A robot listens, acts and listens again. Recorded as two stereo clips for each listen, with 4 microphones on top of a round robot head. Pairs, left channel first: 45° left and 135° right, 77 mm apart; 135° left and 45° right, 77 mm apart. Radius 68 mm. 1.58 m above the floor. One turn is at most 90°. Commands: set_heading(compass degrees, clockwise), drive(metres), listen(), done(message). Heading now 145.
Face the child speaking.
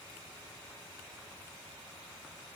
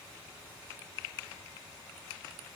listen()
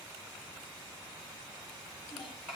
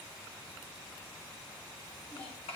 set_heading(55)
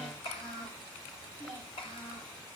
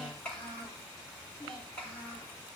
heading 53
set_heading(353)
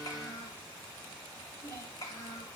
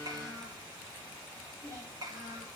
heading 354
done("Facing the child speaking, over 4 m away.")